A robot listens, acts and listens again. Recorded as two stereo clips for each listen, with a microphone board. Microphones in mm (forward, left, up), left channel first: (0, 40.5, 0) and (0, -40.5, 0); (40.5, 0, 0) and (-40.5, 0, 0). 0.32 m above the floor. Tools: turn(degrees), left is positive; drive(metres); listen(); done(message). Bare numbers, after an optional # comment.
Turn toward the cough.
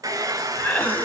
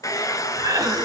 # The cough: 155° left.
turn(155)
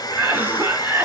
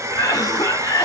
# The cough is now 30° right.
turn(-30)
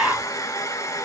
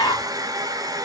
# The cough is now 20° right.
turn(-20)
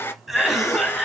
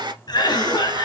done("Facing the cough, 1 to 2 m away.")